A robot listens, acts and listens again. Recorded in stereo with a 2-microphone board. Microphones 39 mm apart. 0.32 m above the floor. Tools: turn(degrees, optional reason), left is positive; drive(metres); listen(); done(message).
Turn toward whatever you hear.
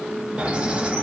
turn(degrees=-30, reason="The bird: about 30° right or 150° right.")
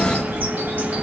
turn(degrees=-115, reason="So it is at 115° right.")
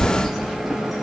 done("Facing the bird, 1 to 2 m away.")